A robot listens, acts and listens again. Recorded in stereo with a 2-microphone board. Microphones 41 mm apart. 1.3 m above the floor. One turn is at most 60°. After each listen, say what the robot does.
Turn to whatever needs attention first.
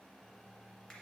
Keep listening.
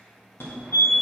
Turn 60° left.
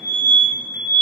Turn 45° left.
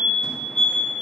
Facing the fire alarm.